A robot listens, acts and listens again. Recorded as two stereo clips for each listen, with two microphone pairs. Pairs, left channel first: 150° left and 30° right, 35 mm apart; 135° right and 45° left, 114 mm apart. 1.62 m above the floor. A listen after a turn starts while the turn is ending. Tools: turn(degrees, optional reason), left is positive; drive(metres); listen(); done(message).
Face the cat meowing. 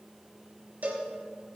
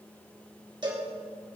listen()
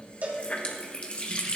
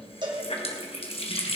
listen()
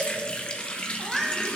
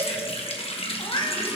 turn(degrees=-120, reason="The cat meowing: 120° right.")
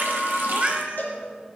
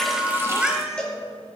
turn(degrees=-35, reason="The cat meowing is now 35° right.")
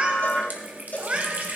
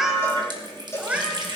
turn(degrees=-20, reason="The cat meowing is now 20° right.")
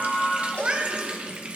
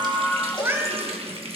done("Facing the cat meowing, 1 to 2 m away.")